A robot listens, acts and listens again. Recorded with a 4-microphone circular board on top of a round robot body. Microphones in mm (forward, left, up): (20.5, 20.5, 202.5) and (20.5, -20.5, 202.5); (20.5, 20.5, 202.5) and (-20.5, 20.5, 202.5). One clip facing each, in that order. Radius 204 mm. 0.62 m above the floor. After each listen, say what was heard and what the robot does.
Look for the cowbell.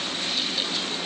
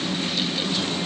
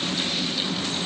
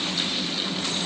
Keep listening.
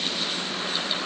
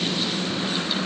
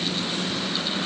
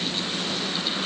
Keep listening.
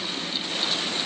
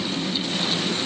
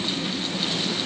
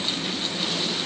I can't make out a cowbell.